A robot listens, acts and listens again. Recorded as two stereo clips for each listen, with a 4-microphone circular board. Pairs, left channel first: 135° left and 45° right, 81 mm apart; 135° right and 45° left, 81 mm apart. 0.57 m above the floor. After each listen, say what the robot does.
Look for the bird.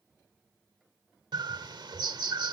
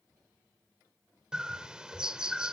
Turn 35° right.
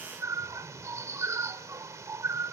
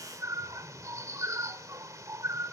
Facing the bird.